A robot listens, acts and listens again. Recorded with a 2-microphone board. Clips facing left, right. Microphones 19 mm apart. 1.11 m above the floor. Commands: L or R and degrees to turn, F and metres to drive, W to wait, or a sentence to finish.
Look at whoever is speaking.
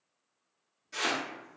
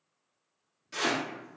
W
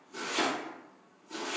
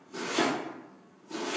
W
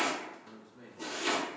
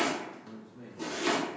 L30
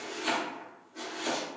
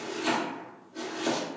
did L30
W
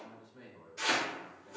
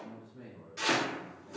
L135
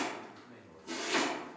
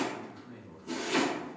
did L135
R10
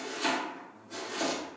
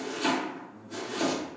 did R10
Facing the man speaking.